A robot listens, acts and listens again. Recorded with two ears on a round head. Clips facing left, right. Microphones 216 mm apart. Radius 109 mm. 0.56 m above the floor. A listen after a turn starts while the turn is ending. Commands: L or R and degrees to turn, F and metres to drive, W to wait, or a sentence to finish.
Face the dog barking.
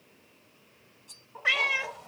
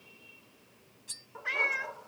R20
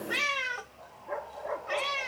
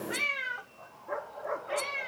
R30
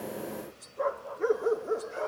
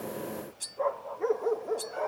L15
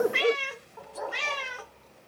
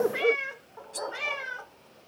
Found it: a dog barking, straight ahead.